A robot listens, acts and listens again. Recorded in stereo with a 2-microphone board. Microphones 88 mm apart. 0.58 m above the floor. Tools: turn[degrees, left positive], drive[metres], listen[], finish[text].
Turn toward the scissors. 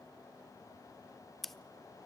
Action: turn[30]
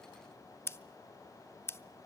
Thought: So it is at 145° left.
Action: turn[145]
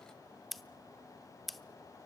Action: finish[Facing the scissors, under 1 m away.]